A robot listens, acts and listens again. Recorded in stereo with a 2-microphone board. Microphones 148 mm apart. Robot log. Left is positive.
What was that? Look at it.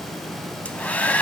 cmd yaw +30
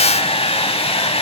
note: So it is at 140° left.
cmd yaw +140
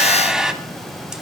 end: Facing the hair dryer, under 1 m away.